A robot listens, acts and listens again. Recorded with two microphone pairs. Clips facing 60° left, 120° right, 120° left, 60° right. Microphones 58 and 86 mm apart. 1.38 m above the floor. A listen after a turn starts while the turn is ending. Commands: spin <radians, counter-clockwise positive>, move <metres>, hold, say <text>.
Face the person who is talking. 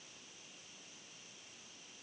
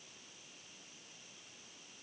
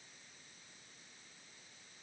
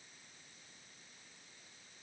hold
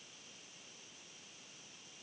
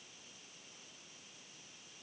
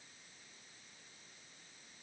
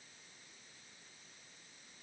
hold
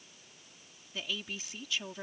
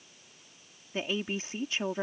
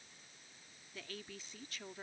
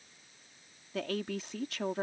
spin -1.13
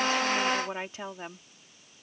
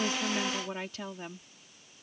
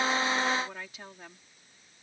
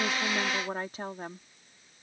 say Found it: a woman speaking, straight ahead.